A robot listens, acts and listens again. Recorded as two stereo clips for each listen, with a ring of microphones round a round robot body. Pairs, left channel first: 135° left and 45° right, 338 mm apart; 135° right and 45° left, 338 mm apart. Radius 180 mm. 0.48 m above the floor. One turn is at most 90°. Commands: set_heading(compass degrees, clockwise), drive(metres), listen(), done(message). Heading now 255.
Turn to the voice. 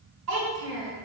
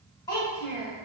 set_heading(310)
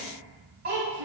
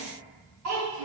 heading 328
set_heading(313)
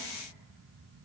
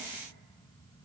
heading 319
set_heading(309)
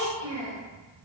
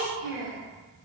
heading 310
done("Found it: a child speaking, straight ahead, 1 to 2 m away.")